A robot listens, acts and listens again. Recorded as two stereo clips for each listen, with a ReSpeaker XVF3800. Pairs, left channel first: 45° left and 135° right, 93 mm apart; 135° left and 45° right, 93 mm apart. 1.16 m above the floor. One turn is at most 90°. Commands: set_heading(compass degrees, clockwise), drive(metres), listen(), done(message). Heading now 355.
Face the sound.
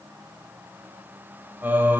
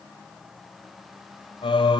set_heading(265)
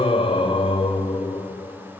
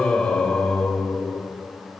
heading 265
set_heading(205)
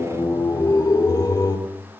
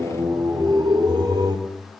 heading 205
done("Facing the singing, 2 to 4 m away.")